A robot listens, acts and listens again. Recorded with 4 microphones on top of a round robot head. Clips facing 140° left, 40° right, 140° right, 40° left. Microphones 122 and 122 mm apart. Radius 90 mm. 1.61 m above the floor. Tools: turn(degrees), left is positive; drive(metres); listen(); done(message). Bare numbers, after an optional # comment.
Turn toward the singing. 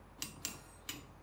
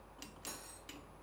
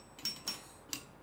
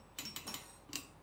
listen()
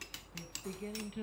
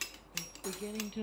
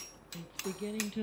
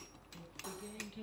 # The singing: 105° right.
turn(-105)
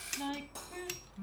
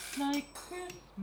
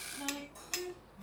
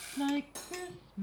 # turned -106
# The singing is now 15° left.
turn(15)
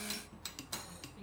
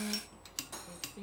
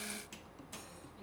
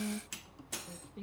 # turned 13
done("Found it: singing, straight ahead, 2 to 4 m away.")